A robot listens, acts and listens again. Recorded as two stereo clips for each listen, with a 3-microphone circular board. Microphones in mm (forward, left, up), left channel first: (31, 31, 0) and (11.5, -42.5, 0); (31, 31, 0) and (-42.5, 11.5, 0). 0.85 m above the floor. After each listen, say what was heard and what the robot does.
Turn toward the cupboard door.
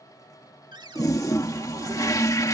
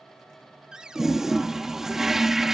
The cupboard door: 85° right. Turn 85° right.
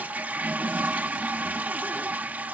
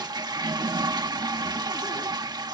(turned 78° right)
Nothing new. It was at 10° right. Turn 10° right.
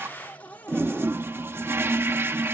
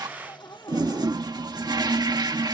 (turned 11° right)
Found it: a cupboard door, straight ahead.